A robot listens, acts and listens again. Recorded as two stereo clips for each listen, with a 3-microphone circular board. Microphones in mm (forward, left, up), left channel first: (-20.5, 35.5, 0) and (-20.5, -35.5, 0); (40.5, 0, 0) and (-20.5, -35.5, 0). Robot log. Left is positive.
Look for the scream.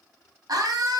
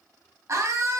note: The scream: 105° right.
cmd yaw -105
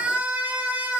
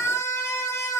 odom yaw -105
note: The scream is now 15° right.
cmd yaw -15
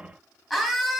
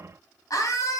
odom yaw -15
end: Found it: a scream, straight ahead.